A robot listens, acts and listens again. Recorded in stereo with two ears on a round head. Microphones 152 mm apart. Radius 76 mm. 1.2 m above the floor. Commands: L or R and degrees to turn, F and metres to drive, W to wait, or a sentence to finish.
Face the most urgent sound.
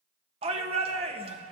R35
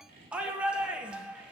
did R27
Facing the shout, 1 to 2 m away.